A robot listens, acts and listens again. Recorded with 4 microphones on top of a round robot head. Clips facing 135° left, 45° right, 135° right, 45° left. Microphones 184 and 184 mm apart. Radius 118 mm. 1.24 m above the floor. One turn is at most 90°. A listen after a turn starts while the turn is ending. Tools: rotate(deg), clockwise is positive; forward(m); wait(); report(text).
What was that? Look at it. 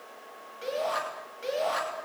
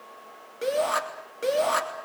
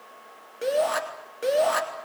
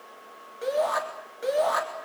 rotate(70)
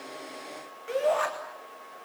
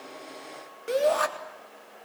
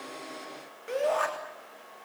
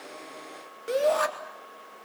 report("Found it: a shout, straight ahead.")